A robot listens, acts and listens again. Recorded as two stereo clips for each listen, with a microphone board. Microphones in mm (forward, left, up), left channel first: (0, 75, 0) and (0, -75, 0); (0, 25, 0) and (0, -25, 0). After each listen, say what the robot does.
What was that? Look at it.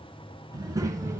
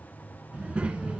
Turn 20° right.
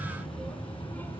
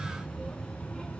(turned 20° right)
Turn 15° left.
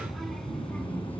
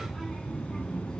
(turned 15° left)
Turn 10° left.
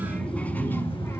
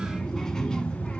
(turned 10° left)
Turn 20° left.
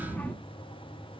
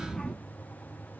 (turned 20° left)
Turn 15° left.
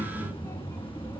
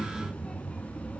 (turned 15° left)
Turn 15° left.
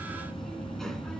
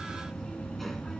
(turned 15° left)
Facing the child speaking.